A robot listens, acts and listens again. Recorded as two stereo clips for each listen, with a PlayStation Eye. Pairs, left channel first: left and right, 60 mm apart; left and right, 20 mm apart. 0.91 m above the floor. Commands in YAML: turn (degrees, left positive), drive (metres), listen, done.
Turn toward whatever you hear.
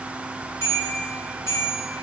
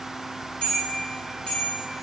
turn: 65
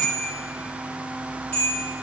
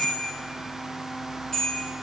turn: 35
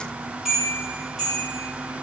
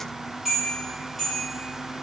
done: "Found it: a bell, straight ahead, 2 to 4 m away."